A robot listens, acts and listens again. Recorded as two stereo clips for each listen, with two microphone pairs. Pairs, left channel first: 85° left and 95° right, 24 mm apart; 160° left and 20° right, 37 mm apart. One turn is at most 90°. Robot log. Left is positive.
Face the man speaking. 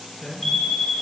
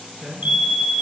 note: The man speaking: 45° left.
cmd yaw +45
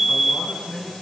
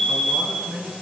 note: The man speaking is now 15° left.
cmd yaw +15
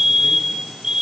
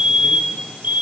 cmd idle
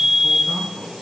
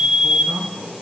end: Found it: a man speaking, straight ahead, over 4 m away.